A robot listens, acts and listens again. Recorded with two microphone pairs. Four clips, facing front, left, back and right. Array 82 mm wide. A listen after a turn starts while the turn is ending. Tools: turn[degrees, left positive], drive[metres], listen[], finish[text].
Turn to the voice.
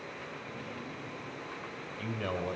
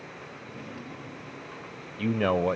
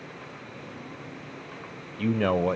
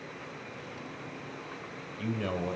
Thought: The man speaking: 135° left.
Action: turn[135]
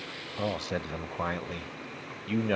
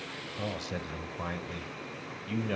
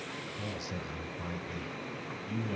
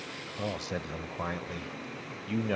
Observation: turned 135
Thought: The man speaking is now 15° right.
Action: turn[-15]
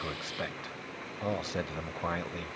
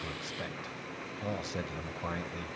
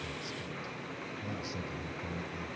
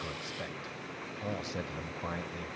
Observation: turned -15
Action: finish[Facing the man speaking, 1 to 2 m away.]